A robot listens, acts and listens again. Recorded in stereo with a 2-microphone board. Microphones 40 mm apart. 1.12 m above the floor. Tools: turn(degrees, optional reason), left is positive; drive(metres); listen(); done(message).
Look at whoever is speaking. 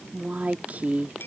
turn(degrees=-45, reason="The woman speaking: about 45° right or 135° right.")
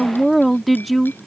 done("Facing the woman speaking.")